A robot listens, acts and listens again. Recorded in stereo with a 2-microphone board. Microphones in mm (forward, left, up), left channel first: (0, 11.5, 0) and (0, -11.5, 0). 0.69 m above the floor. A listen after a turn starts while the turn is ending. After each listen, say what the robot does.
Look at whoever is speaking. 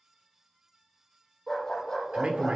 Turn 50° right.
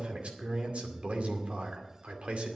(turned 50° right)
Turn 75° right.
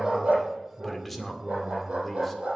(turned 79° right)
Facing the man speaking, 2 to 4 m away.